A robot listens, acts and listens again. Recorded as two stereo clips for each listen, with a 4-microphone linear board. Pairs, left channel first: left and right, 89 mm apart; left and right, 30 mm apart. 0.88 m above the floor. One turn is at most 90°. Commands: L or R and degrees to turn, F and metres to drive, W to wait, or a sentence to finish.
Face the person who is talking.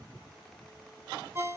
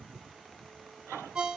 W
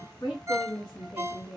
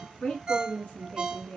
L50
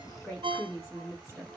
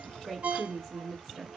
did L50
Facing the woman speaking, 1 to 2 m away.